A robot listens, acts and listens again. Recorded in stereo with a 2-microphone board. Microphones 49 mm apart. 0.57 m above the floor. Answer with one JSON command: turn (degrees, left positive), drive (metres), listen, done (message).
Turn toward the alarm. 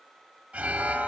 {"turn": -30}
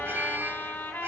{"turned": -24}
{"turn": -125}
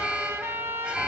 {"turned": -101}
{"turn": -25}
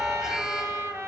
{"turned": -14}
{"turn": -10}
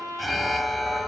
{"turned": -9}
{"done": "Facing the alarm."}